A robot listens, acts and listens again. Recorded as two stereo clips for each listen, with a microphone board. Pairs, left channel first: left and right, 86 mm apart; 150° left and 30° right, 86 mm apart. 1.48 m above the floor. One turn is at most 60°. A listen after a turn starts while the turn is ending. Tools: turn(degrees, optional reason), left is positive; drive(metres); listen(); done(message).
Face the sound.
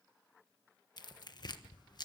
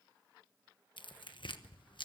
turn(degrees=60, reason="The tearing paper: 125° left.")
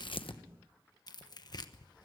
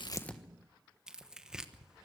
turn(degrees=50, reason="The tearing paper is now 50° left.")
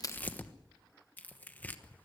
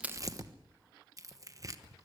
turn(degrees=20, reason="The tearing paper is now 20° left.")
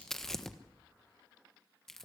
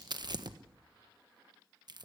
done("Facing the tearing paper.")